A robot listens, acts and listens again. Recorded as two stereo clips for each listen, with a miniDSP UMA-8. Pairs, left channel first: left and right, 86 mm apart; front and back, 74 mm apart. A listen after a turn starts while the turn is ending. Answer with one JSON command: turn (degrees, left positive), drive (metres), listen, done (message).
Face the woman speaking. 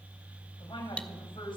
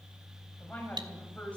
{"turn": 75}
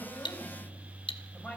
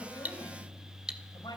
{"turn": 15}
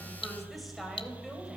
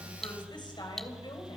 {"done": "Facing the woman speaking."}